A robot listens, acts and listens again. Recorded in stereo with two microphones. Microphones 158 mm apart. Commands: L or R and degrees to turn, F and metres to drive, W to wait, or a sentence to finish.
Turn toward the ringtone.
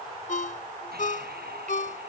L60
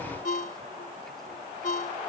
L65
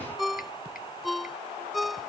Facing the ringtone.